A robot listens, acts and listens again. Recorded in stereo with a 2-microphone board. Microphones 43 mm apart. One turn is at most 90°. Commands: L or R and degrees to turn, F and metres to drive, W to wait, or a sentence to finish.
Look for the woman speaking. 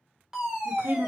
R60
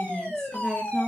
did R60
L20
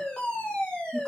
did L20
W
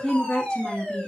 L20
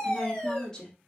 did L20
L15
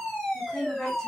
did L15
L10
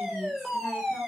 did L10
W
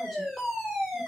W
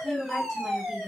Found it: a woman speaking, straight ahead, 2 to 4 m away.